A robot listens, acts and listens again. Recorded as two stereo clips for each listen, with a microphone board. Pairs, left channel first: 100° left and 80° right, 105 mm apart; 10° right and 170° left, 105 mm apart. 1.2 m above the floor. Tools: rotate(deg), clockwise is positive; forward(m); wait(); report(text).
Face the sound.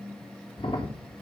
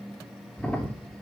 rotate(-65)
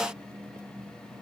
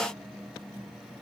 report("Facing where the crack came from. I can't hear it now.")